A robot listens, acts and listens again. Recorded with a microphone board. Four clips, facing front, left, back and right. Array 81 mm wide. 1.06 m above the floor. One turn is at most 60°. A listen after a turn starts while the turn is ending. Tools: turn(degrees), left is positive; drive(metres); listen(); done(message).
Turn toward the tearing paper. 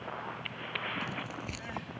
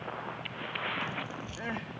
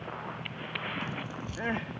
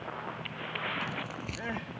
turn(degrees=-45)
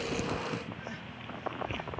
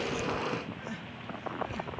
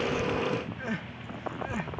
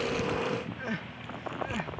turn(degrees=-10)
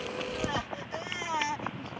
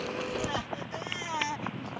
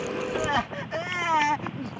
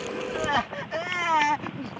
listen()
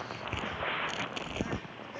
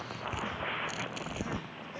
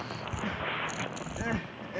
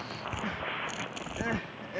done("Facing the tearing paper.")